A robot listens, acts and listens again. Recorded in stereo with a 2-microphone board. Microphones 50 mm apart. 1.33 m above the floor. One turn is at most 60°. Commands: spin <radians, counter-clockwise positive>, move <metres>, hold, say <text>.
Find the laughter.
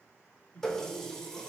spin 0.87
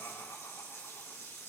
hold
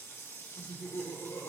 spin 1.05
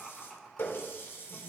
say Facing the laughter, 2 to 4 m away.